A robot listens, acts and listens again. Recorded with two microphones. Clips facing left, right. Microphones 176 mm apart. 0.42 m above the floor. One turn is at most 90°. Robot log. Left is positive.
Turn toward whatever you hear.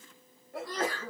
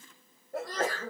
note: The sneeze: about 45° right or 135° right.
cmd yaw -45
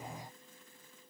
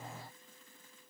cmd idle
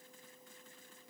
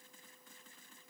end: I heard a sneeze, but can't make it out now. It was about straight ahead or 90° right.